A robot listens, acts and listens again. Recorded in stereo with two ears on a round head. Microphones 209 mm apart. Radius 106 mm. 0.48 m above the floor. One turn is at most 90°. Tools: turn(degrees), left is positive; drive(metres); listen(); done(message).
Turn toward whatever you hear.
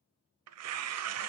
turn(degrees=-90)
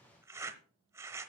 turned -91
turn(degrees=-10)
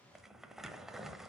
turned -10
done("Facing the tearing paper, under 1 m away.")